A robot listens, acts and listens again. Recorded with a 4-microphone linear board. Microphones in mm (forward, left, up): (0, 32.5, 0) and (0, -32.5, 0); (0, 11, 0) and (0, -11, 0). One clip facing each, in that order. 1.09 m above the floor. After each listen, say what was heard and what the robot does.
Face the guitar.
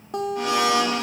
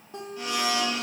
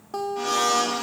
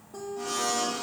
Turn 90° left.
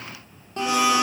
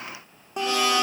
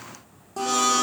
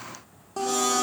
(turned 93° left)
So it is at 15° right. Turn 15° right.
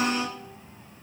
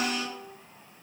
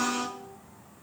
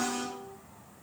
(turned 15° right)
Keep listening.
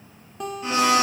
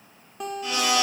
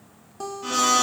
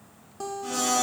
Facing the guitar, under 1 m away.